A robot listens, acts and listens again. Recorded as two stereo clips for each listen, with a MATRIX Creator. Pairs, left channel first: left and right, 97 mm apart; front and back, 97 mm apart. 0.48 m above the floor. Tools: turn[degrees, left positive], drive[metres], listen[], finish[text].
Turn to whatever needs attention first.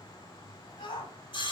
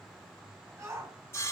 Thought: The shout: 120° left.
Action: turn[120]
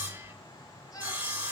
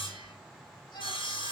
Thought: The shout is now 40° left.
Action: turn[40]
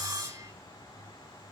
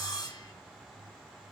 Action: listen[]
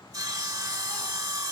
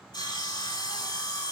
Action: listen[]
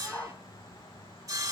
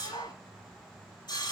Thought: The shout is now 20° left.
Action: turn[20]
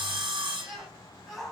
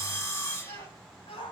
Action: finish[Facing the shout.]